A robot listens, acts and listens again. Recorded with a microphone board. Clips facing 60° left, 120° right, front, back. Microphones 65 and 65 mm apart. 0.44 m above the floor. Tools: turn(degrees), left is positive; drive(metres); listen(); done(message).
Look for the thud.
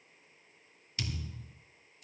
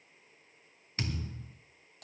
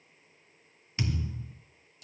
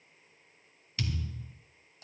turn(degrees=-65)
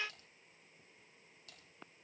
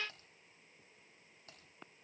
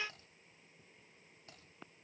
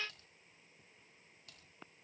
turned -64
done("Facing where the thud came from. I can't hear it now.")